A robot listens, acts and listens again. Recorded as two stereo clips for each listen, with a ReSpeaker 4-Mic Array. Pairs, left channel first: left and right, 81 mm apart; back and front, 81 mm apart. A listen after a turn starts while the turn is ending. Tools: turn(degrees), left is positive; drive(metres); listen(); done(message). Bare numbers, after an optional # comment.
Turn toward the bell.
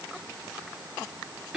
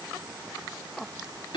listen()
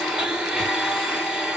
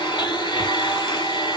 listen()
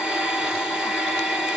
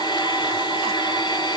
done("I can't make out a bell, only a blender.")